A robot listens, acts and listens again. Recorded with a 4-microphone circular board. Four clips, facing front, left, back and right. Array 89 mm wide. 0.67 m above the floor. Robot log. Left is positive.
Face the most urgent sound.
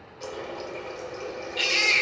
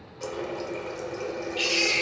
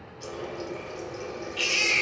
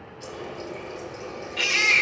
note: The baby crying: 65° right.
cmd yaw -65
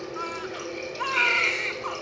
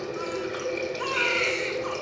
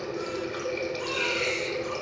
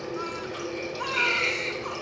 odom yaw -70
end: Facing the baby crying.